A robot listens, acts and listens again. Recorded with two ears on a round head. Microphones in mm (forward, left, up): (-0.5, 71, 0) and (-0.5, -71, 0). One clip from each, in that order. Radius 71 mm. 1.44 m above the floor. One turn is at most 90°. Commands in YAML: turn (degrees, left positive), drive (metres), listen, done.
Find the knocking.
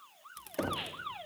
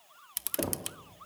turn: 45
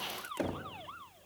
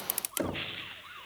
done: "Facing the knocking, 1 to 2 m away."